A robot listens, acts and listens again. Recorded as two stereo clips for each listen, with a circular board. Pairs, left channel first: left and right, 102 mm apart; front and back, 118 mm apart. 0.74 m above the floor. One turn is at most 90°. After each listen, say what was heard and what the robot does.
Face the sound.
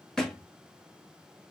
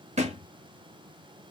The thud: 175° left. Turn 90° left.
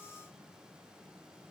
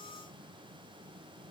Nothing new. It was at 85° left. Turn 85° left.
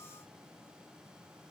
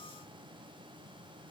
Facing where the thud came from. I can't hear it now.